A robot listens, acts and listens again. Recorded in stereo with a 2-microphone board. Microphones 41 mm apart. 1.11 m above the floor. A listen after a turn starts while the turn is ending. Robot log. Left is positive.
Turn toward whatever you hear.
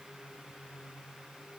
cmd idle
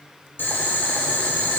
note: The boiling: about 60° left or 120° left.
cmd yaw +60
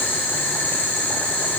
note: So it is at 60° left.
cmd yaw +60
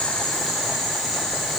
end: Found it: boiling, straight ahead.